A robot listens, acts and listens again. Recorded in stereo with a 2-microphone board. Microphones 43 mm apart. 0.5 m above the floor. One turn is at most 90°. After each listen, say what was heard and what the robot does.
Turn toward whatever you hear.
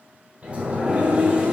The sliding door: about 25° right or 155° right. Turn 25° right.
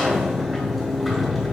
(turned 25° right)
Found it: a sliding door, straight ahead, 1 to 2 m away.